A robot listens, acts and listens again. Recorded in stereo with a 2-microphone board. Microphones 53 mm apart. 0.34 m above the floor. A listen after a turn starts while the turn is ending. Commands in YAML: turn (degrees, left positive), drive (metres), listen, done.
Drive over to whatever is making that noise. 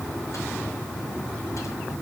listen: true
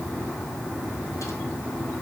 listen: true
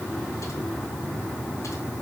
done: "I can't make out anything to turn to."